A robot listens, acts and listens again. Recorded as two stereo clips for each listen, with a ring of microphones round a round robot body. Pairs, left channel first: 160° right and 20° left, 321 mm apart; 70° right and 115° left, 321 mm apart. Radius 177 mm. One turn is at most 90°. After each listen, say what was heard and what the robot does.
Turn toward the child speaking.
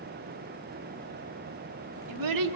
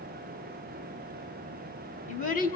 Facing the child speaking, 2 to 4 m away.